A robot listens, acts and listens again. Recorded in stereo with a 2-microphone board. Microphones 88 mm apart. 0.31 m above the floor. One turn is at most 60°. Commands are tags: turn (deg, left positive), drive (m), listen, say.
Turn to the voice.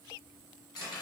<listen/>
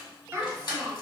<turn deg="-30"/>
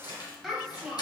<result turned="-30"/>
<say>Facing the child speaking.</say>